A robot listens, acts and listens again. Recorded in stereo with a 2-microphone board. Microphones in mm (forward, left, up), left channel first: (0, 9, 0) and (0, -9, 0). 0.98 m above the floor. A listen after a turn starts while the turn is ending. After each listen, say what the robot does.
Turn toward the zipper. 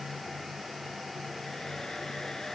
Keep listening.
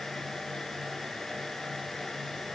Keep listening.
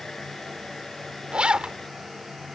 Turn 90° right.
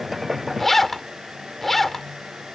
Turn 10° left.
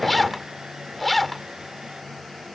Found it: a zipper, straight ahead.